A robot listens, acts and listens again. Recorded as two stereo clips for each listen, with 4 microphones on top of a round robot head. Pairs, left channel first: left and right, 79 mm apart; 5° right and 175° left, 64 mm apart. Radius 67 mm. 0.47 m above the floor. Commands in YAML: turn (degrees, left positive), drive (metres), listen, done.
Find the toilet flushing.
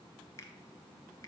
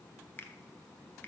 listen: true
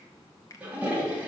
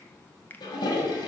turn: -15
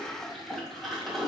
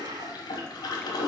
done: "Found it: a toilet flushing, straight ahead, 1 to 2 m away."